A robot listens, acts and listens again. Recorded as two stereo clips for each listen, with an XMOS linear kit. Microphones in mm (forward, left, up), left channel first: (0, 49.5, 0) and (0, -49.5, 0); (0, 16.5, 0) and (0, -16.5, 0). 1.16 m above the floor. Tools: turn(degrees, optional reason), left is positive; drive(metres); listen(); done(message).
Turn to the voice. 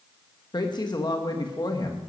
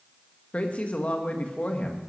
turn(degrees=45, reason="The woman speaking: about 45° left or 135° left.")
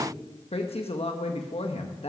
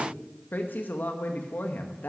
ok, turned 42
turn(degrees=90, reason="So it is at 90° left.")
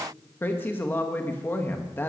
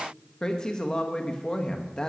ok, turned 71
turn(degrees=20, reason="The woman speaking is now 20° left.")
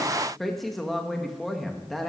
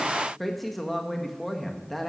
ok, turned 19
done("Facing the woman speaking, 1 to 2 m away.")